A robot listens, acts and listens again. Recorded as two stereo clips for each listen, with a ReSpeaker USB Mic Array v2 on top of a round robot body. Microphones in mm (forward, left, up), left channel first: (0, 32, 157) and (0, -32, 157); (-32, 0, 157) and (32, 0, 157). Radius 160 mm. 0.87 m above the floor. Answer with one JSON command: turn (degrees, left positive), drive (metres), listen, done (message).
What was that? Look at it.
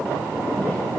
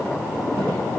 {"listen": true}
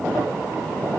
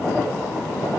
{"listen": true}
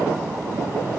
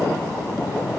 {"done": "I can't make out anything to turn to."}